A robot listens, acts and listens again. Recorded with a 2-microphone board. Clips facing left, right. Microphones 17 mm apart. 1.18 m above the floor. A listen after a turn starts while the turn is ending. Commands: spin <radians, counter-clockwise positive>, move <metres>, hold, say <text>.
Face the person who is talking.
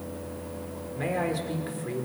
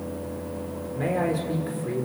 spin 0.52
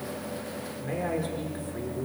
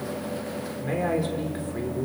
spin -0.35
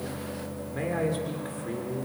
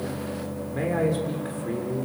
say Found it: a man speaking, straight ahead.